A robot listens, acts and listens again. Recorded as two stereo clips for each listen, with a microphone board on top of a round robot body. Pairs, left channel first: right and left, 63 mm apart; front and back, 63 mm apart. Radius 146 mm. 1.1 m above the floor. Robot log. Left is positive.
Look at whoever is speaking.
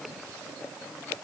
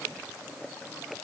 cmd idle
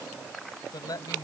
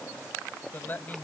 note: The man speaking: 65° right.
cmd yaw -65
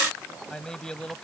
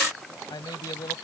note: The man speaking is now 10° right.
cmd yaw -10
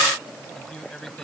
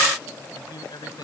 note: The man speaking is now 10° right.
cmd yaw -10
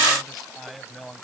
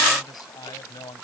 end: Found it: a man speaking, straight ahead.